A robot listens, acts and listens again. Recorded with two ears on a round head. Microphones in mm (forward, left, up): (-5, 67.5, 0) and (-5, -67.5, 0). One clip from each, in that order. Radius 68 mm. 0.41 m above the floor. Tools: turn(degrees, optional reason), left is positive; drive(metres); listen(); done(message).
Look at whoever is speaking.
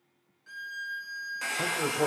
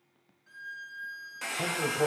turn(degrees=35, reason="The man speaking: about 35° left or 145° left.")
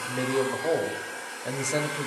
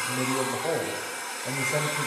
turn(degrees=105, reason="So it is at 105° left.")
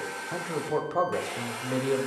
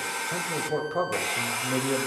turn(degrees=10, reason="The man speaking is now 10° left.")
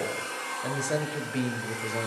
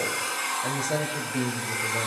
done("Facing the man speaking, 1 to 2 m away.")